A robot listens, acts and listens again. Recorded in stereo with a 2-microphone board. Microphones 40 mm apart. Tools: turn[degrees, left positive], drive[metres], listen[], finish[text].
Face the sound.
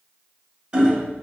Thought: The hammering: about 25° right or 155° right.
Action: turn[-25]
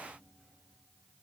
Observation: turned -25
Action: listen[]
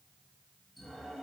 Action: listen[]
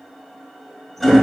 Action: finish[Found it: hammering, straight ahead, 1 to 2 m away.]